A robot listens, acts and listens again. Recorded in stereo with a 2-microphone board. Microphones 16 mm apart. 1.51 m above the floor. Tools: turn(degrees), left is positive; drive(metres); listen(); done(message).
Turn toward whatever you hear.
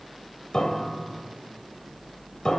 turn(degrees=55)
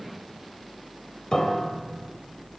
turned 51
turn(degrees=70)
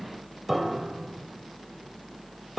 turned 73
done("Facing the piano, 2 to 4 m away.")